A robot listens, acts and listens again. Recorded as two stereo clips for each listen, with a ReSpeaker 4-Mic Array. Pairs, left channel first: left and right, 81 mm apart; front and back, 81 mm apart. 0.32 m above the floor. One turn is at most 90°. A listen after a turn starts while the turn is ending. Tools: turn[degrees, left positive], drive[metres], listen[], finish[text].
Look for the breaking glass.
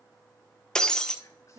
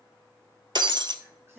Thought: The breaking glass: 170° left.
Action: turn[90]
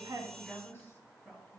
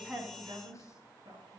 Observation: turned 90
Thought: Nothing new. It was at 80° left.
Action: turn[80]
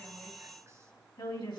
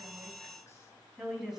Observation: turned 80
Action: finish[Facing where the breaking glass came from. I can't hear it now.]